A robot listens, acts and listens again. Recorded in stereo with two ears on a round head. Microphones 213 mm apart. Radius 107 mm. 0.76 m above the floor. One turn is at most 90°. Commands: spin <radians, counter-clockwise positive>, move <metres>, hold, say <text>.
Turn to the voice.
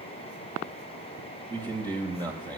spin -0.35
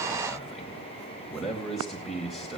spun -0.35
say Found it: a man speaking, straight ahead.